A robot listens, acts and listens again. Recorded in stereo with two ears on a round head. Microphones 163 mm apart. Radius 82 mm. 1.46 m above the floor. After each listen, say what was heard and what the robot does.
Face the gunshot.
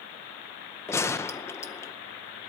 Turn 30° left.
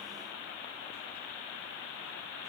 Keep listening.
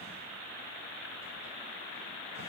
I heard a gunshot, but can't make it out now. It was about 15° right or 135° left.